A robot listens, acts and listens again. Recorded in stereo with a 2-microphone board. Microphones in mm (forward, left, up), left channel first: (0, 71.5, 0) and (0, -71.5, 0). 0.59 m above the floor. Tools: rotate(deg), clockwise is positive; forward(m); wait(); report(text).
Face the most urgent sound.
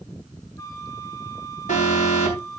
rotate(-60)
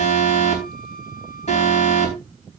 rotate(-55)
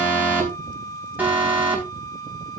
rotate(15)
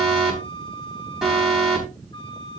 report("Facing the alarm.")